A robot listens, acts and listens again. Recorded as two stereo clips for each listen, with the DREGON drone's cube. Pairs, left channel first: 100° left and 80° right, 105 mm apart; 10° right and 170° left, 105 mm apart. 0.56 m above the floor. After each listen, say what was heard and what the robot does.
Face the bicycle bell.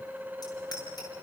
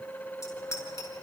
The bicycle bell: 50° left. Turn 50° left.
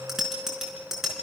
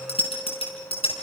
The bicycle bell is now 10° left. Turn 10° left.
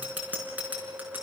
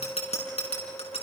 Found it: a bicycle bell, straight ahead.